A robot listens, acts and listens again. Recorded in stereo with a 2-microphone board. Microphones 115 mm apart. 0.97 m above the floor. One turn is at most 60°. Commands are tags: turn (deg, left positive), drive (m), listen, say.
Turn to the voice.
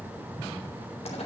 <listen/>
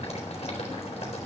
<listen/>
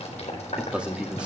<turn deg="-30"/>
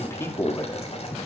<turn deg="25"/>
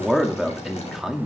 <say>Facing the man speaking, 2 to 4 m away.</say>